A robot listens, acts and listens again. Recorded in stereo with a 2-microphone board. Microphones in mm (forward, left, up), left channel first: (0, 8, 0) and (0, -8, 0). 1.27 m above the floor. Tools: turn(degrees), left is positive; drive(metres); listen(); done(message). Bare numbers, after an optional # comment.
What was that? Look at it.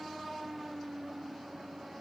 listen()
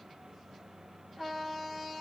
listen()
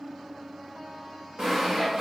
# The sawing: about 55° right or 125° right.
turn(-55)
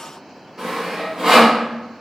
# So it is at 65° right.
turn(-65)
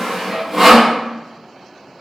# The sawing is now 20° right.
turn(-20)
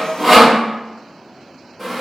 done("Facing the sawing, 1 to 2 m away.")